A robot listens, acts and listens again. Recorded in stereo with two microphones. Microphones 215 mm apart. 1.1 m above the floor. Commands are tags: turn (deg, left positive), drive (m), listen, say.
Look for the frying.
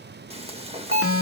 <turn deg="-30"/>
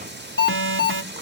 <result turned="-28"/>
<turn deg="-120"/>
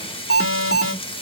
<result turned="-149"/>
<turn deg="25"/>
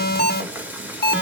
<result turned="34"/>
<turn deg="-10"/>
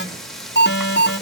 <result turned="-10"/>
<say>Found it: frying, straight ahead, 1 to 2 m away.</say>